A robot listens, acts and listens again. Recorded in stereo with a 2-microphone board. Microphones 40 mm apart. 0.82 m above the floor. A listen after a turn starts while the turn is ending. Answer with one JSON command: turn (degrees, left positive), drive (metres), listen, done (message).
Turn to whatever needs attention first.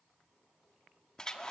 {"listen": true}
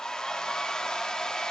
{"listen": true}
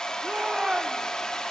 {"turn": -20}
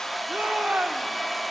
{"turn": -140}
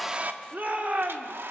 {"turn": -55}
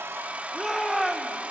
{"done": "Found it: a shout, straight ahead, 2 to 4 m away."}